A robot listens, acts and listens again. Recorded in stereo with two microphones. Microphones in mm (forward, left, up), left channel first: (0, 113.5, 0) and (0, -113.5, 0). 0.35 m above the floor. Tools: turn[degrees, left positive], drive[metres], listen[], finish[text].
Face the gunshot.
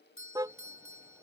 Action: listen[]
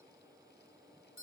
Action: listen[]
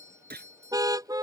Thought: The gunshot: about 45° right or 135° right.
Action: turn[-45]
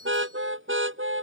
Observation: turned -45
Action: listen[]
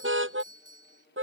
Action: finish[I heard a gunshot, but can't make it out now. It was about straight ahead or 90° right.]